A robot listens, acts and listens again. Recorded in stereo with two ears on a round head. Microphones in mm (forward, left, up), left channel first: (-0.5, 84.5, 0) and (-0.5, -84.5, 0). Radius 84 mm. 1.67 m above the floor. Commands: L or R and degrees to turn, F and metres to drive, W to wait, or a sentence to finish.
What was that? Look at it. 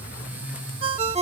R30
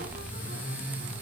W
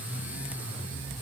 W
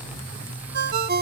R110
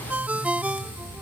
R10
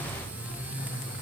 W
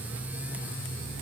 W
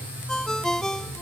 Found it: a ringtone, straight ahead.